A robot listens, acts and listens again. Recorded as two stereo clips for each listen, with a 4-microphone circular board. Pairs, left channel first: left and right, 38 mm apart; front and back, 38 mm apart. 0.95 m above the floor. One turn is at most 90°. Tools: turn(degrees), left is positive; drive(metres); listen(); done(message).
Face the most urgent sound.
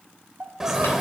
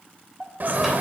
turn(degrees=-90)
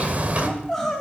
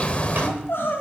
done("Found it: crying, straight ahead, 2 to 4 m away.")